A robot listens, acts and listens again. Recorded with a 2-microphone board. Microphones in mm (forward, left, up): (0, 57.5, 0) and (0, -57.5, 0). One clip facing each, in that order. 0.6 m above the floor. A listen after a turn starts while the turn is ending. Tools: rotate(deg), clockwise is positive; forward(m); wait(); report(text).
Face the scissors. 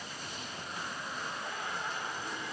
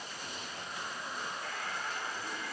wait()
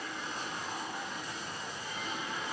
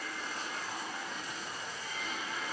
wait()
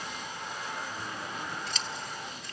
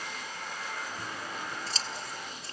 rotate(35)
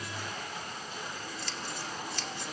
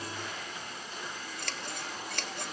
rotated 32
rotate(110)
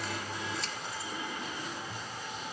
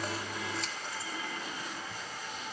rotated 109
wait()
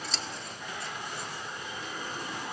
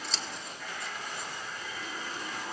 report("Facing the scissors, 1 to 2 m away.")